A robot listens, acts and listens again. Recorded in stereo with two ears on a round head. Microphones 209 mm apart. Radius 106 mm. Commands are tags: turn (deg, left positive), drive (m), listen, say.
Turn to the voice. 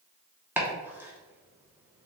<listen/>
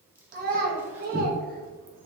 <turn deg="-40"/>
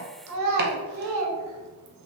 <turn deg="-95"/>
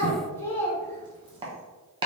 <turn deg="10"/>
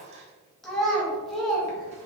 <say>Facing the child speaking, under 1 m away.</say>